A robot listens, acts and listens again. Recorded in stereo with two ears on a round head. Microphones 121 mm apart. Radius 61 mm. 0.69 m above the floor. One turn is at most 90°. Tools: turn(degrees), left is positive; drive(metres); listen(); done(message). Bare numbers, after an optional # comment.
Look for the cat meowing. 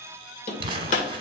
listen()
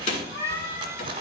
# The cat meowing: about 25° left or 155° left.
turn(25)
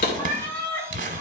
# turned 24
turn(30)
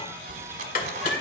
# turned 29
listen()
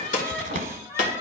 # The cat meowing: about 20° left or 160° left.
turn(20)
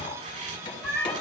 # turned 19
turn(30)
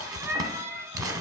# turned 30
# So it is at 15° right.
turn(-15)
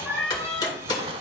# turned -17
done("Found it: a cat meowing, straight ahead.")